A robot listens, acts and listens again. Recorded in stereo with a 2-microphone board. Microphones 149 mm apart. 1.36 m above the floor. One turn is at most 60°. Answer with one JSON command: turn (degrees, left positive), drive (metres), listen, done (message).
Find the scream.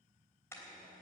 {"listen": true}
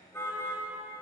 {"listen": true}
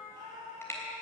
{"turn": -35}
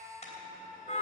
{"done": "Found it: a scream, straight ahead."}